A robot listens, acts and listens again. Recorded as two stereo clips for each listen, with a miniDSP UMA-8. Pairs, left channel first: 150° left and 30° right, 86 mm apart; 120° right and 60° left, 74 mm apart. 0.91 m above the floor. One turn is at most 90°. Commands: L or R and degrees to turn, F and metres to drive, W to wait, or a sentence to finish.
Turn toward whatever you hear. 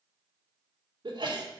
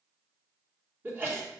Found it: a sneeze, straight ahead.